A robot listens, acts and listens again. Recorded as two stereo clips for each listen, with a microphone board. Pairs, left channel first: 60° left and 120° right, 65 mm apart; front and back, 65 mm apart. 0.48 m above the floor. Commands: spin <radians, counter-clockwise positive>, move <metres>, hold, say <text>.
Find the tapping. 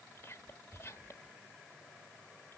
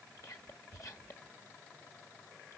hold
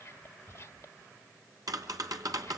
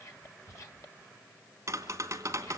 spin -2.36
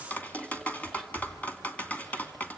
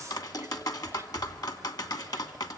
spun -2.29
say Facing the tapping, 2 to 4 m away.